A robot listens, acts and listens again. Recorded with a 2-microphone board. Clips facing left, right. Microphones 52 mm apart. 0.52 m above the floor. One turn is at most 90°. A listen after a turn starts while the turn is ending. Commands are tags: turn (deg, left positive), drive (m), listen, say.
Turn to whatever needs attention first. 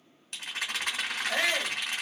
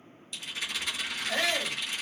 <turn deg="30"/>
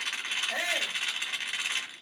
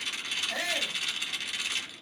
<turn deg="90"/>
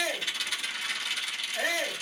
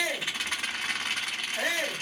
<turn deg="50"/>
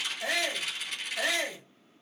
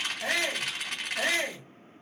<say>Found it: a shout, straight ahead.</say>